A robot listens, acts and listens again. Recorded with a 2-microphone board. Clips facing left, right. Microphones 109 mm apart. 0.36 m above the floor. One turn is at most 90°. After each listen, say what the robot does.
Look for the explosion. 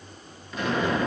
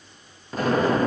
Turn 40° right.
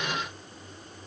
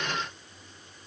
Keep listening.
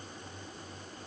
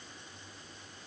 I heard an explosion, but can't make it out now. It was about straight ahead or 100° right.